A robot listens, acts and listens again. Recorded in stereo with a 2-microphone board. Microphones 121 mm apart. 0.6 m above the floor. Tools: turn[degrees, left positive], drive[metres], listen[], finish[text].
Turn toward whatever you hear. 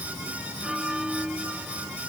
Action: turn[-30]
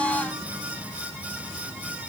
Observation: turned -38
Action: listen[]
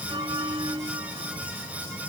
Thought: So it is at 140° right.
Action: turn[-140]
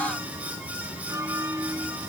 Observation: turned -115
Thought: The bell is now 25° right.
Action: turn[-25]
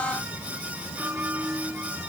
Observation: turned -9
Thought: The bell is now 15° right.
Action: turn[-15]
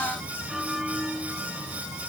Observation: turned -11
Action: finish[Found it: a bell, straight ahead.]